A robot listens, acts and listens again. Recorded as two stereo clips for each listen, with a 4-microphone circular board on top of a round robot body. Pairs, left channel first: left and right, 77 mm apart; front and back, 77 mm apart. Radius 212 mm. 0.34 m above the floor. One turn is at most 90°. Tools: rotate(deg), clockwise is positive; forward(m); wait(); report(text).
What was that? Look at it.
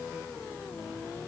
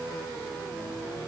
wait()
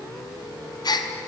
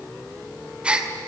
rotate(-90)
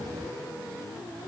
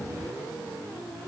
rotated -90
rotate(-15)
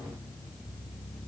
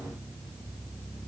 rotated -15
report("Facing where the gasp came from. I can't hear it now.")